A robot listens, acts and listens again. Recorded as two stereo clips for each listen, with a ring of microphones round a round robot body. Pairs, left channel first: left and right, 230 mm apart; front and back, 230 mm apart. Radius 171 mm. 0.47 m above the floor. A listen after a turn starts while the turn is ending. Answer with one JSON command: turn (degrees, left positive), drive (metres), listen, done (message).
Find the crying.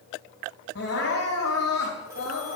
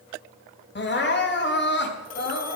{"turn": 40}
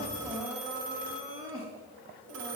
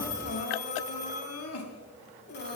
{"turn": -10}
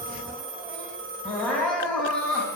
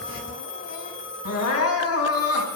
{"done": "Facing the crying, 2 to 4 m away."}